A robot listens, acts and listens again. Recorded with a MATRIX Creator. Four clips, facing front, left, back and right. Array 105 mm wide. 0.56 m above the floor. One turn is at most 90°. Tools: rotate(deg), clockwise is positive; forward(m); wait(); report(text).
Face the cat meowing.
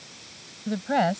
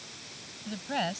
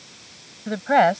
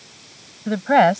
wait()
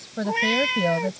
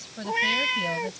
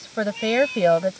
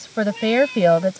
rotate(-40)
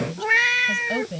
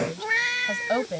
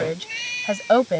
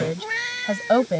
rotate(-10)
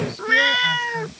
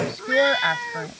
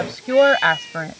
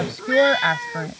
report("Facing the cat meowing.")